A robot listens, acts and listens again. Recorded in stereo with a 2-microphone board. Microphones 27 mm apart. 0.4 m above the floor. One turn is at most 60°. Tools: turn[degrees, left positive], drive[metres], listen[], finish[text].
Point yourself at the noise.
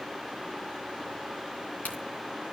Action: turn[60]
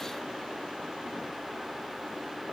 Thought: Nothing new. It was at 30° left.
Action: turn[30]
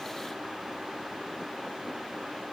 Action: finish[Facing where the crack came from. I can't hear it now.]